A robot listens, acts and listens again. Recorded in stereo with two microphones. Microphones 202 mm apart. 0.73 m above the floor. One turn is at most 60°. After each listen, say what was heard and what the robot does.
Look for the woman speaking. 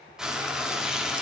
Keep listening.
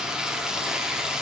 Keep listening.
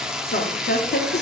The woman speaking: about 60° left or 120° left. Turn 60° left.
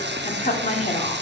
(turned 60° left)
So it is at 30° left. Turn 30° left.
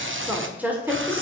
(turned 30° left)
The woman speaking is now 10° right. Turn 10° right.
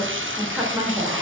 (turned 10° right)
Found it: a woman speaking, straight ahead.